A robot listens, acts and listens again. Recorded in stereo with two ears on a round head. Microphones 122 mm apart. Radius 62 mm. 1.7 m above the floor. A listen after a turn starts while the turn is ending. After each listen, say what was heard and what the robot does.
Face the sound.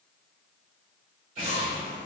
The explosion: about 70° right or 110° right. Turn 70° right.
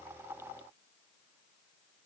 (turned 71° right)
Keep listening.
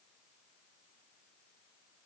I heard an explosion, but can't make it out now. It was about straight ahead or 40° right.